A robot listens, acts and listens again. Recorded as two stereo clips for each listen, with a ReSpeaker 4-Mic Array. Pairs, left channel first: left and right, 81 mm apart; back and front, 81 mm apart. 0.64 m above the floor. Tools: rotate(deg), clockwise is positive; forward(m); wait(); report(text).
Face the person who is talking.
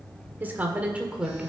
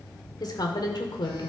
rotate(170)
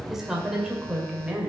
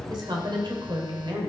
rotate(15)
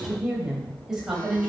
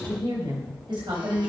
rotate(10)
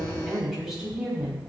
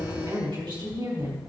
rotate(10)
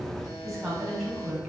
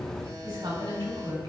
report("Facing the woman speaking.")